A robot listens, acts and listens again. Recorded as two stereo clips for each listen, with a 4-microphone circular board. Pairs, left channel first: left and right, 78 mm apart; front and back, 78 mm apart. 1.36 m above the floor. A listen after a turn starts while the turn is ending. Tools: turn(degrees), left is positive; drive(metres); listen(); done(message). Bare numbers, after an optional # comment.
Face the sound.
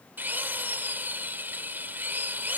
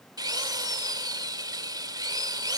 # The drill: 155° right.
turn(-155)
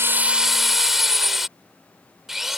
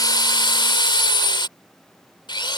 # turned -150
done("Found it: a drill, straight ahead.")